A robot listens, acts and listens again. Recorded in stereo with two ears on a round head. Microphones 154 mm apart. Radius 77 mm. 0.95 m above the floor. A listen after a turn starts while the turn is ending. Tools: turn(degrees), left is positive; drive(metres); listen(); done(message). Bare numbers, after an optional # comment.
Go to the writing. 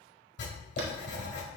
# The writing: about 70° left or 110° left.
turn(70)
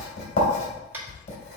# So it is at 40° left.
turn(40)
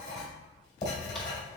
# The writing is now 25° left.
turn(25)
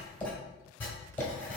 # The writing is now 10° left.
turn(10)
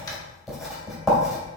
drive(1.0)
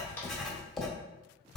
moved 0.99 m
drive(1.0)
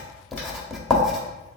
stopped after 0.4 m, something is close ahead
done("Arrived at the writing, straight ahead.")